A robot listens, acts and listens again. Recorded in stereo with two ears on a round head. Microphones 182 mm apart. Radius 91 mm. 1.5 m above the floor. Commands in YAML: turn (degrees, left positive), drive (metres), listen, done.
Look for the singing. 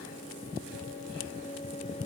listen: true
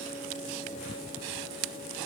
listen: true
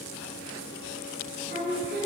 turn: 40
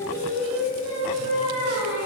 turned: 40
turn: 95
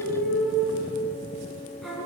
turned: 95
done: "Found it: singing, straight ahead, over 4 m away."